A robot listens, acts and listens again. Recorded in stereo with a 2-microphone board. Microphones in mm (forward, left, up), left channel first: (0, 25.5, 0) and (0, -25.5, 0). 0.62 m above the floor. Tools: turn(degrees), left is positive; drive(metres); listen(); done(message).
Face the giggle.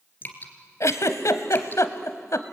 turn(degrees=90)
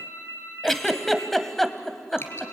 done("Found it: a giggle, straight ahead.")